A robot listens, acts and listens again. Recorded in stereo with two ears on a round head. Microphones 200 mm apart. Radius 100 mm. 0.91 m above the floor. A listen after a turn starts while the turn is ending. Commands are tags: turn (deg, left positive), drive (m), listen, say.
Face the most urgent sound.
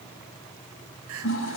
<turn deg="-70"/>
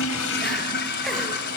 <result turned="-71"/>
<listen/>
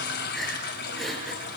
<say>Found it: crying, straight ahead, 2 to 4 m away.</say>